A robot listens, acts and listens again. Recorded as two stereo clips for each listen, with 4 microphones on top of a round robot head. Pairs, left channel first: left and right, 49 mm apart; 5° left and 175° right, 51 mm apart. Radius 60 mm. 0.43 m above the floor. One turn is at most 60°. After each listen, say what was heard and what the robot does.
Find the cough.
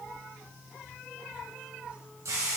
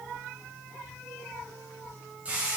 Keep listening.
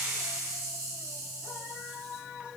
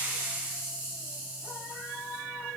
Keep listening.
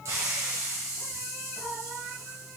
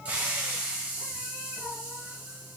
I can't make out a cough, only a hiss.